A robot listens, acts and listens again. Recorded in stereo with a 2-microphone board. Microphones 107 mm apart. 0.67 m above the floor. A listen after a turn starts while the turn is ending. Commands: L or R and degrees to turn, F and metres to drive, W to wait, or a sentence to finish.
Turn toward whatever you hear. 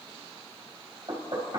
R50
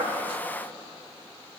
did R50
W
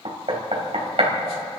R75
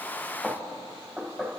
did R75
Found it: knocking, straight ahead.